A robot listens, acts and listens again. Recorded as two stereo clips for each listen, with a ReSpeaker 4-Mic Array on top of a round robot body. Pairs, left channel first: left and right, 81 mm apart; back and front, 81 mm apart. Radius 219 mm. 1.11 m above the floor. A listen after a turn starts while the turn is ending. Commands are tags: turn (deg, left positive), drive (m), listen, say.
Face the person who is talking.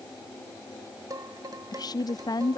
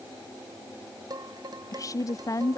<turn deg="130"/>
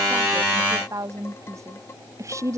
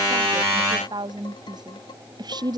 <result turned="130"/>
<turn deg="-35"/>
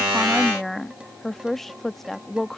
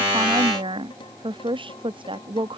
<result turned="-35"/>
<say>Found it: a woman speaking, straight ahead.</say>